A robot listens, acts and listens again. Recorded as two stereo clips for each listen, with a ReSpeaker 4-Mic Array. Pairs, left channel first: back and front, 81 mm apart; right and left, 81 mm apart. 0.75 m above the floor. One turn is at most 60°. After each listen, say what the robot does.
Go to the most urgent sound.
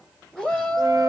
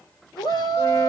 Turn 60° right.
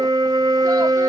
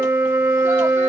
Turn 40° right.
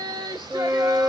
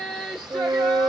Drive 1.0 m forward.
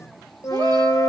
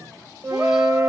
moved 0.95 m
Keep listening.
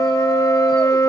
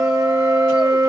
Keep listening.
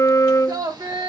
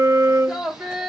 Turn 10° left.
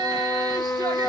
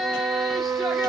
Drive 1.0 m forward.
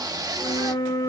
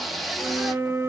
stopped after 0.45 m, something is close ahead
Arrived at the shout, straight ahead.